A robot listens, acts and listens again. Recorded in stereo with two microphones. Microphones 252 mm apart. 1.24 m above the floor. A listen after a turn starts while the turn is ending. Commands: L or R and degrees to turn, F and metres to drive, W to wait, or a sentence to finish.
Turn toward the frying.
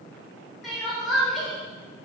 W
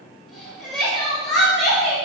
W
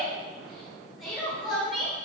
I can't make out frying, only crying.